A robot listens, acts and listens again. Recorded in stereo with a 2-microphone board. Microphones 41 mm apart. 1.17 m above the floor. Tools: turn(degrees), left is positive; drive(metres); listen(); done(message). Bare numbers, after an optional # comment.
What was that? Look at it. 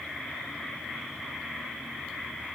listen()
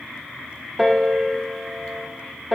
turn(-30)
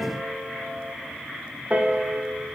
# So it is at 140° right.
turn(-140)
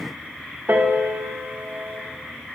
# The piano is now 65° right.
turn(-65)
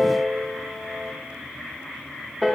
done("Found it: a piano, straight ahead.")